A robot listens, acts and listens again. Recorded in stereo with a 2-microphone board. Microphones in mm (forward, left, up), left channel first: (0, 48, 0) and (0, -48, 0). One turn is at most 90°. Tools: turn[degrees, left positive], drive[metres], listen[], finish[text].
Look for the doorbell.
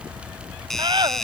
Action: turn[30]
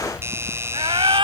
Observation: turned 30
Thought: So it is at 25° right.
Action: turn[-25]
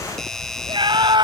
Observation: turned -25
Action: finish[Found it: a doorbell, straight ahead.]